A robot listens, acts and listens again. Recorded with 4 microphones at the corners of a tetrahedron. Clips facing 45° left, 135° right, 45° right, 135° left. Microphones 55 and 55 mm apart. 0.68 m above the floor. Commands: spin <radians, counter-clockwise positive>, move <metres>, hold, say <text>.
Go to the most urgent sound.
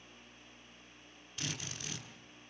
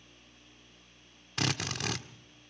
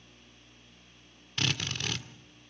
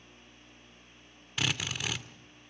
hold
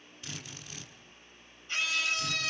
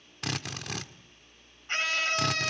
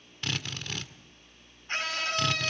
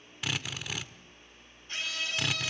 spin -1.57
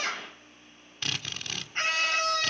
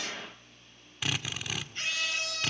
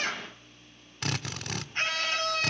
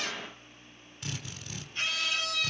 move 1.0
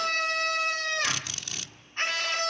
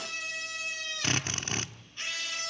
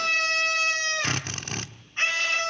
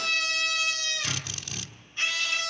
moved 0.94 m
move 1.0
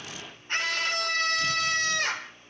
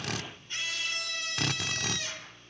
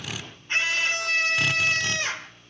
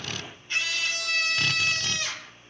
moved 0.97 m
spin 0.17
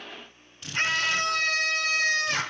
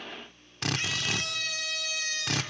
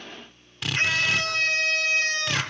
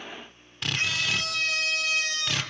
move 1.0
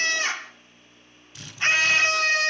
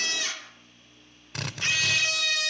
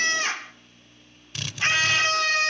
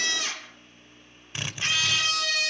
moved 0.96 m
move 1.0
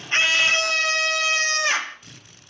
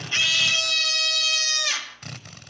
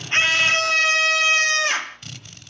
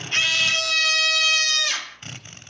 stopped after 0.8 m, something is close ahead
say I am next to the scream.